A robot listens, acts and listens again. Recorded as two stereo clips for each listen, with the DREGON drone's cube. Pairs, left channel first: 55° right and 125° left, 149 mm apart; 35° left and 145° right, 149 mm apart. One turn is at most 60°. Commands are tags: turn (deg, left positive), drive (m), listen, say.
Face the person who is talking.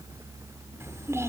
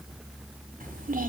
<turn deg="-60"/>
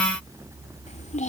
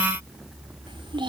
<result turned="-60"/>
<turn deg="-60"/>
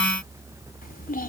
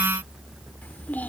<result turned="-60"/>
<turn deg="-45"/>
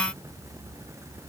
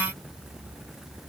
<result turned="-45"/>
<listen/>
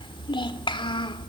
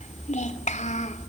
<say>Facing the child speaking.</say>